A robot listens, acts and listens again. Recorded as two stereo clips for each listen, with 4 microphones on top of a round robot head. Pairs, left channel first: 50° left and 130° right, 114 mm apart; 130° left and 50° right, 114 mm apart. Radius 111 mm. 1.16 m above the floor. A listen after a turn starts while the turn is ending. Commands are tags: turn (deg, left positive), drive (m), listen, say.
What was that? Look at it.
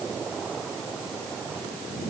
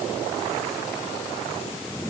<listen/>
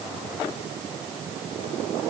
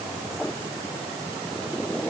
<listen/>
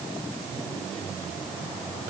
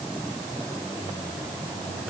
<say>I can't make out anything.</say>